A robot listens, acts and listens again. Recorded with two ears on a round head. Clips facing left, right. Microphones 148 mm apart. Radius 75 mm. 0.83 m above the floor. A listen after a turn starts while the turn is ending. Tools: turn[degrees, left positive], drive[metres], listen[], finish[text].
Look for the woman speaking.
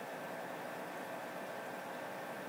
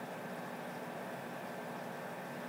Action: listen[]
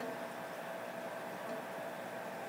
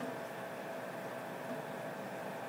Action: listen[]
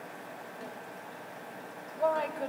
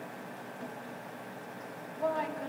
Thought: The woman speaking: about 65° left or 115° left.
Action: turn[65]
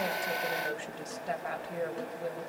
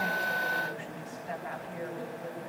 Thought: So it is at 50° left.
Action: turn[50]
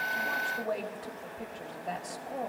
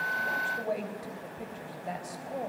Thought: The woman speaking is now 10° right.
Action: turn[-10]
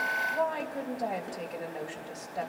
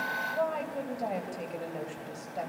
Action: finish[Facing the woman speaking, 2 to 4 m away.]